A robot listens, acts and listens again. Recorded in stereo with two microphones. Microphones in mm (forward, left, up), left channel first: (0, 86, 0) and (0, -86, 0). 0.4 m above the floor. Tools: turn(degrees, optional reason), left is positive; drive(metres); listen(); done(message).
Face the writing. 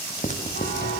turn(degrees=45, reason="The writing: about 45° left or 135° left.")
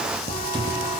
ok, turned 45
listen()
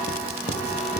listen()
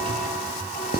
turn(degrees=85, reason="So it is at 85° left.")
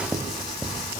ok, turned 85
done("Found it: writing, straight ahead, 2 to 4 m away.")